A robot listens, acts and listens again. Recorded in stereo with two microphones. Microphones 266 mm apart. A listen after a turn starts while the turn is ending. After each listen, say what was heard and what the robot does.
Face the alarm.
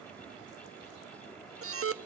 The alarm: about 55° right or 125° right. Turn 55° right.
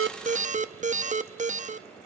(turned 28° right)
So it is at 30° right. Turn 30° right.
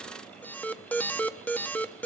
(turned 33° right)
Facing the alarm.